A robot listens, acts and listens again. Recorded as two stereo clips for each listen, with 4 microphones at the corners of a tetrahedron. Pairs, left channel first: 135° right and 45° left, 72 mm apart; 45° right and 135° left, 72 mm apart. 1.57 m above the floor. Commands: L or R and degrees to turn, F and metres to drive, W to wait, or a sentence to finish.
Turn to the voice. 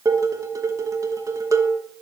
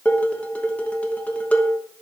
W
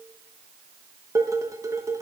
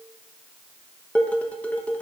W
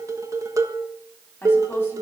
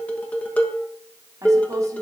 L175
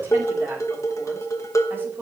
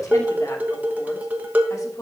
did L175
R10
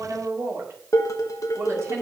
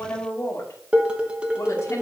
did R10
Found it: a woman speaking, straight ahead, 2 to 4 m away.